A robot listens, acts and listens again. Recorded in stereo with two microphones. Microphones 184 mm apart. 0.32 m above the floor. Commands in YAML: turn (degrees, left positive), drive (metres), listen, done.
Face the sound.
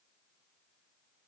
listen: true
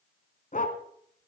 turn: 45
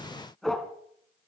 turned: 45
done: "Found it: a dog barking, straight ahead."